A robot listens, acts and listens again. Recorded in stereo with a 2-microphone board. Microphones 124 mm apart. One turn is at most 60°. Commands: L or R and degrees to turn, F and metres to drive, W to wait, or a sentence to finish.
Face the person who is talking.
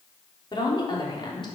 L40
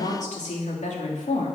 L60
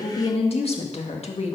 L60
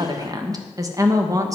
R25
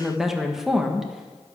Facing the woman speaking, 1 to 2 m away.